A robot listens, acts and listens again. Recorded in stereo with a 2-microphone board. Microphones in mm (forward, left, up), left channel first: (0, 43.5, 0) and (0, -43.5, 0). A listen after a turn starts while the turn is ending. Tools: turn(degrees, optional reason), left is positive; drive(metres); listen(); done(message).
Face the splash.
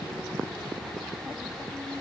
listen()
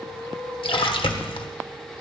turn(degrees=90)
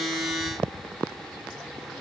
done("I heard a splash from this way, but can't make it out now.")